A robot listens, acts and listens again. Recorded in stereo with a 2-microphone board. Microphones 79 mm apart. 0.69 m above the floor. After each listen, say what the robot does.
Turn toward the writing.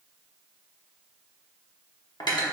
Keep listening.
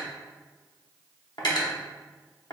Keep listening.
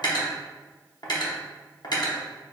I can't make out writing, only cutlery clinking.